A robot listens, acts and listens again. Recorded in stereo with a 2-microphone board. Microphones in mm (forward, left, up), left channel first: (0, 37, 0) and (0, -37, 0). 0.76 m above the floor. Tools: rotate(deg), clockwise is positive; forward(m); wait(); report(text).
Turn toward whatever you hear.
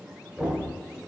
rotate(30)
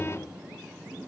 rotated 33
wait()
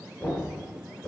rotate(-25)
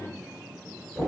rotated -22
report("Facing the knocking, 2 to 4 m away.")